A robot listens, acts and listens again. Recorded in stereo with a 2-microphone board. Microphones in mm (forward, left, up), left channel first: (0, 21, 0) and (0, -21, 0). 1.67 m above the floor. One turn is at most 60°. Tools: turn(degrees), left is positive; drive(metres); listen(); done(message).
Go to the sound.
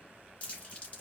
turn(degrees=30)
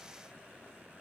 listen()
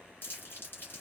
turn(degrees=60)
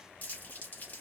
turn(degrees=55)
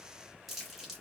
drive(metres=1.0)
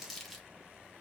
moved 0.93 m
drive(metres=1.0)
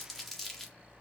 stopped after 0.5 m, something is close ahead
turn(degrees=10)
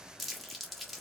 done("Arrived at the crumpling, straight ahead.")